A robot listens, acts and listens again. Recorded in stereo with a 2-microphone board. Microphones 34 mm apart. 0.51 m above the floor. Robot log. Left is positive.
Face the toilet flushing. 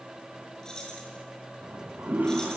note: The toilet flushing: about 70° right or 110° right.
cmd yaw -70
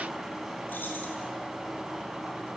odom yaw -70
end: Facing the toilet flushing.